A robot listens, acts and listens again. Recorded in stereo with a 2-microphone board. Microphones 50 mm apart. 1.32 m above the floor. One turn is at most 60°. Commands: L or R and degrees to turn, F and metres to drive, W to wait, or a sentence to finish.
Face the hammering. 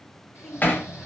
L40
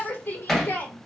Facing the hammering, 1 to 2 m away.